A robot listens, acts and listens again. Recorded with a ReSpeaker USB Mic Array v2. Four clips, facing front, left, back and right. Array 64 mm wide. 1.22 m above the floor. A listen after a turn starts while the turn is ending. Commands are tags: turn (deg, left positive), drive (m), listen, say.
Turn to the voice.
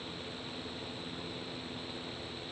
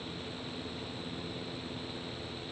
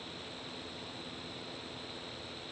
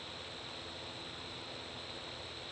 <listen/>
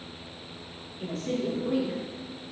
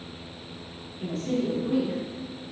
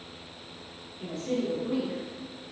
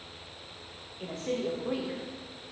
<turn deg="-75"/>
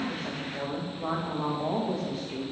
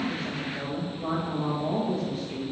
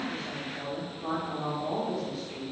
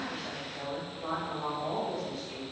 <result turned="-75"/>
<say>Facing the woman speaking, under 1 m away.</say>